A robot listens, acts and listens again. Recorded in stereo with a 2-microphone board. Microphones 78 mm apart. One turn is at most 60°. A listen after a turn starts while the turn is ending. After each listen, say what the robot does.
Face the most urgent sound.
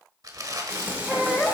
Turn 30° left.
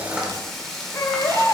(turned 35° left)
Turn 60° left.
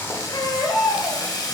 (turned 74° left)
Turn 60° left.
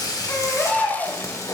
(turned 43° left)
Turn 20° left.
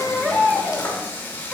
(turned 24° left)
Facing the baby crying, 1 to 2 m away.